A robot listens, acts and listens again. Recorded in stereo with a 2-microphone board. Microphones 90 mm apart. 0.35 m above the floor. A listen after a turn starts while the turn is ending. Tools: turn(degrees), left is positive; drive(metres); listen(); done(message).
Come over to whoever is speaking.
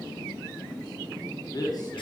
turn(degrees=50)
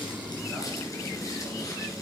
listen()
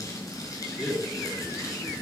drive(metres=1.0)
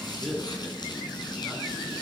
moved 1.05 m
drive(metres=1.0)
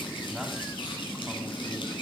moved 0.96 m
listen()
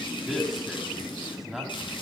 drive(metres=1.0)
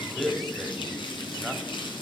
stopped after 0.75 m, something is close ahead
done("Arrived at the man speaking, straight ahead.")